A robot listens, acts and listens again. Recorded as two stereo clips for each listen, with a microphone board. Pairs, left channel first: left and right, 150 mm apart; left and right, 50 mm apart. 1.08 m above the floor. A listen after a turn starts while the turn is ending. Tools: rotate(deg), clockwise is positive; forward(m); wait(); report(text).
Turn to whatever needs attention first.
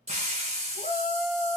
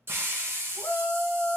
rotate(-65)
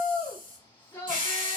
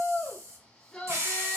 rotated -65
rotate(-15)
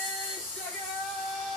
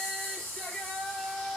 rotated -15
report("Facing the shout, 1 to 2 m away.")